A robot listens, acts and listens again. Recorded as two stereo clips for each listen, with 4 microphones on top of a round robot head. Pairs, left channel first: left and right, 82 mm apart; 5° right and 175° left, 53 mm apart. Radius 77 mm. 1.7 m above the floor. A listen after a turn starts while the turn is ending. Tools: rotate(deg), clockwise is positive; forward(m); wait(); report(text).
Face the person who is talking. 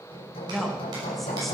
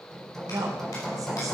rotate(-180)
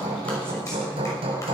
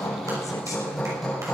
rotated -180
wait()
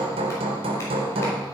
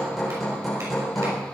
wait()
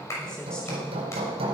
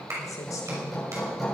report("I heard a woman speaking from this way, but can't make it out now.")